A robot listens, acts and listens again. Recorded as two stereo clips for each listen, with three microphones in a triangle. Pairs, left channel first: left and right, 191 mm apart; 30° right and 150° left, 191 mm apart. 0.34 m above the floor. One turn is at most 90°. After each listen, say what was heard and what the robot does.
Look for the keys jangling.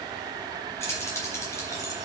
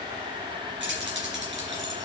The keys jangling: 165° left. Turn 90° left.
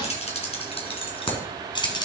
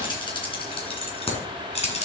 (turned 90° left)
The keys jangling is now 25° left. Turn 25° left.
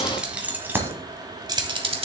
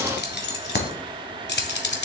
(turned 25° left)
The keys jangling is now 35° right. Turn 35° right.
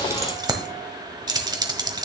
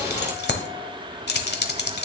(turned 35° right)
The keys jangling is now 25° right. Turn 25° right.
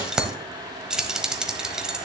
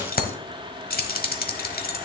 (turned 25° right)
Found it: keys jangling, straight ahead, 1 to 2 m away.